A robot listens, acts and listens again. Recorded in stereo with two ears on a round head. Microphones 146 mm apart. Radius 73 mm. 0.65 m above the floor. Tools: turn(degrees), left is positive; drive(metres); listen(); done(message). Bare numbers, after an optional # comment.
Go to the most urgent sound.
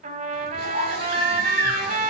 # The baby crying: about 60° right or 120° right.
turn(-60)
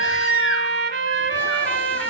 listen()
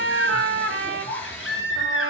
drive(1.0)
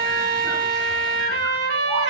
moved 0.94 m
listen()
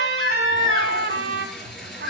drive(1.0)
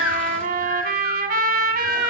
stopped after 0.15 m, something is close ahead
done("Something is in my way. I am facing the baby crying but have not reached it.")